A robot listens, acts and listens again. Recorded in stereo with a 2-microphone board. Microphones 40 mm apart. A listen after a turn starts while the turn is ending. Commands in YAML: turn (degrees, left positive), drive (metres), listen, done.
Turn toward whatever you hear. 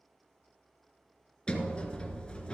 turn: 25
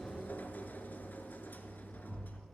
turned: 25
turn: 130
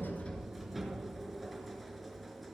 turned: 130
done: "Facing the sliding door, 1 to 2 m away."